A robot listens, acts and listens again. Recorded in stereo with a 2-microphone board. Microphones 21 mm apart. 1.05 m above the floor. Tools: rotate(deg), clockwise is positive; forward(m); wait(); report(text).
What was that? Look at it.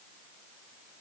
wait()
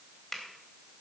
rotate(-30)
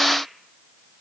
wait()
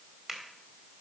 rotate(20)
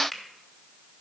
report("Facing the finger snap, 2 to 4 m away.")